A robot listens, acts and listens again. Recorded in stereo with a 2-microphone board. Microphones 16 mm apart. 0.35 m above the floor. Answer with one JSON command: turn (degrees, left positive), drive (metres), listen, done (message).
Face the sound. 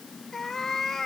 {"turn": 20}
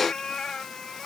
{"turn": 40}
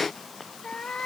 {"turn": 100}
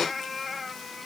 {"done": "Facing the cat meowing."}